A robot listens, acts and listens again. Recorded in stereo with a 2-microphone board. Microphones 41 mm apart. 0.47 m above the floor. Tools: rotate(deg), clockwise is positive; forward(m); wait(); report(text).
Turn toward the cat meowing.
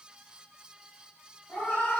rotate(-40)
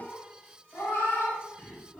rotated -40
rotate(-100)
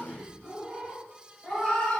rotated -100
report("Facing the cat meowing.")